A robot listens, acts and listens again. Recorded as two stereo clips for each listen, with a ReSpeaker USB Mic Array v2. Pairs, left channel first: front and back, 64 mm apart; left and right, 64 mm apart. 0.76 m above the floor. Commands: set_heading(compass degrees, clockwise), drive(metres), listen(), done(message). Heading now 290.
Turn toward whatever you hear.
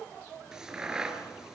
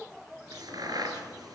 set_heading(30)
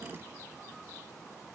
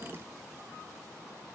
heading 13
set_heading(28)
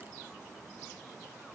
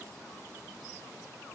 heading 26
done("Facing where the crack came from. I can't hear it now.")